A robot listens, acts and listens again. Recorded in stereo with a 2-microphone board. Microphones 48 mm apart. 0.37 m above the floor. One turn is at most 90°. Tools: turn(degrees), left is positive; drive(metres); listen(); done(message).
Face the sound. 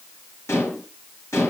turn(degrees=70)
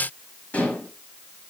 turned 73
turn(degrees=35)
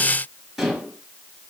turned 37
done("Found it: dishes clattering, straight ahead, 2 to 4 m away.")